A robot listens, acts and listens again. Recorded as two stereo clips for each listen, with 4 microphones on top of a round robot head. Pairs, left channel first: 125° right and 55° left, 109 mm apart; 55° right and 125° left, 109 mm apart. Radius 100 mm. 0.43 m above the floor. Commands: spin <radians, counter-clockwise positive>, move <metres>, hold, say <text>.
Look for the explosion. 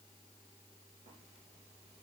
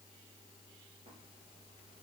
hold
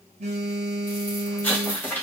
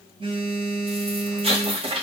spin 2.71
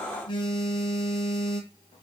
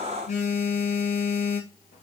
say Facing where the explosion came from. I can't hear it now.